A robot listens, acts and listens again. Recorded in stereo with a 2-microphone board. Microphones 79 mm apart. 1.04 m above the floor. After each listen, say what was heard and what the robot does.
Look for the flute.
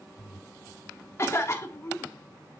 Keep listening.
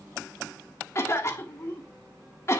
Keep listening.
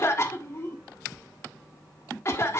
I can't make out a flute, only a cough.